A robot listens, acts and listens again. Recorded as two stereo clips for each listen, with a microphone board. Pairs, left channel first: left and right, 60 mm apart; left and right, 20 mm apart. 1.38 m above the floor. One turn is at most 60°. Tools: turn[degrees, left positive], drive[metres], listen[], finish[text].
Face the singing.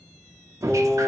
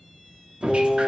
Action: turn[30]
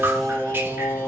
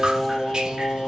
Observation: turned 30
Thought: So it is at 130° left.
Action: turn[60]
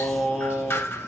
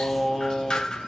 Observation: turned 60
Thought: The singing is now 10° right.
Action: turn[-10]
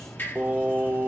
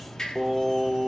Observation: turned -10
Thought: The singing is now 30° right.
Action: turn[-30]
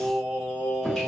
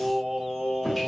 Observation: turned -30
Thought: The singing is now 15° right.
Action: turn[-15]
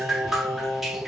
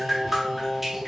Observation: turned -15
Action: finish[Facing the singing, 2 to 4 m away.]